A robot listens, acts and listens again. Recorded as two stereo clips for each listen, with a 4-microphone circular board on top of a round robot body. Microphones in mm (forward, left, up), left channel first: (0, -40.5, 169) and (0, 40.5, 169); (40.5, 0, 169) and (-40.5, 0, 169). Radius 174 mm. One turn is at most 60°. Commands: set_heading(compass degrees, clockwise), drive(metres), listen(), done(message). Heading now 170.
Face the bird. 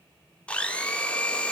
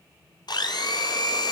listen()
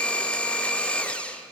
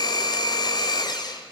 listen()
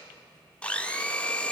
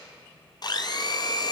done("I can't make out a bird, only a blender.")